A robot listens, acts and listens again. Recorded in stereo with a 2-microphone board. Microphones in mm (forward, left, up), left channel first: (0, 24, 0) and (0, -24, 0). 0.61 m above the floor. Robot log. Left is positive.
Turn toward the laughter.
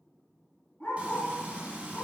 cmd idle
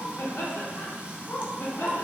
note: The laughter: about 55° left or 125° left.
cmd yaw +55
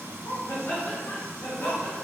note: So it is at 60° left.
cmd yaw +60
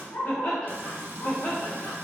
note: The laughter is now 60° left.
cmd yaw +60
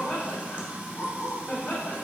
note: The laughter is now 25° left.
cmd yaw +25
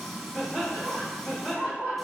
end: Found it: laughter, straight ahead, 1 to 2 m away.